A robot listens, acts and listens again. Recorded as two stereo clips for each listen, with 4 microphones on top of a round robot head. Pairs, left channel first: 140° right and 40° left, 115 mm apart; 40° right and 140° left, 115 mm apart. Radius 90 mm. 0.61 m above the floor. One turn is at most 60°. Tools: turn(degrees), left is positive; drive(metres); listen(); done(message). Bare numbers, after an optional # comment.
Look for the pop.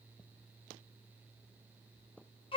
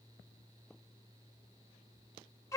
listen()
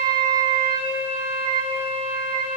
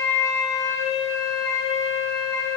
listen()
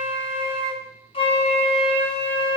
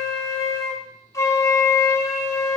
done("I can't make out a pop to turn to.")